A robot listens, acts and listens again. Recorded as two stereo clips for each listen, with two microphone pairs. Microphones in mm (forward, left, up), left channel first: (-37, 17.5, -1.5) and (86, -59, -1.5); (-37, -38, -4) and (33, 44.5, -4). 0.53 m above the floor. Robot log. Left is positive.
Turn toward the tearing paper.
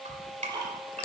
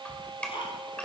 cmd idle
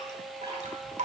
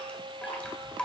cmd idle
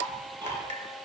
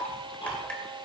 end: I can't make out tearing paper, only ticking and dripping.